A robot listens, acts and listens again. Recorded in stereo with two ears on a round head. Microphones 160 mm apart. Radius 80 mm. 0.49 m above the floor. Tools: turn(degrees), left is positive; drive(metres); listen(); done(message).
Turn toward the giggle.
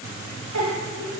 turn(degrees=-90)
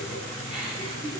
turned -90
done("Found it: a giggle, straight ahead, 2 to 4 m away.")